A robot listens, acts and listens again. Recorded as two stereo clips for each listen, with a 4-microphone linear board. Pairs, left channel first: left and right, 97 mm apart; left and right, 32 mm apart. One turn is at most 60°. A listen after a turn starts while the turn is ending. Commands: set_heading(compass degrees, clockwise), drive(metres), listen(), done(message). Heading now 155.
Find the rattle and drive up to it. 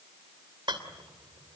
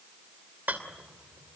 set_heading(210)
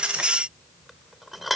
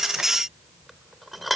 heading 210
drive(1.0)
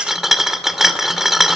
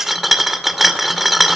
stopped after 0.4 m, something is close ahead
done("Something is in my way. I am facing the rattle but have not reached it.")